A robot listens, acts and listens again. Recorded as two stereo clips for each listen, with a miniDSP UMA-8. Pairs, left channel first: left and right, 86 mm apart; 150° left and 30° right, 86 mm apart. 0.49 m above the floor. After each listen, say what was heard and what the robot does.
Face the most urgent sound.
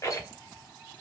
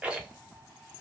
Keep listening.
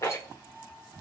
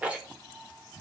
Keep listening.
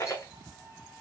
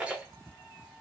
I can't make out anything urgent, only a rattle.